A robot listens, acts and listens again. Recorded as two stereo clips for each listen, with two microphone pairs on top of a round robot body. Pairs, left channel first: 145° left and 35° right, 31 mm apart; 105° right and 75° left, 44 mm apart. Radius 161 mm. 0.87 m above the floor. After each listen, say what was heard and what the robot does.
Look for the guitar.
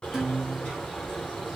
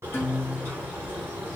The guitar: 120° right. Turn 120° right.
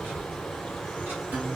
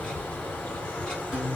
Keep listening.
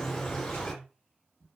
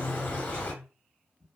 Keep listening.
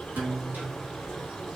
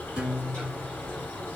Found it: a guitar, straight ahead, 1 to 2 m away.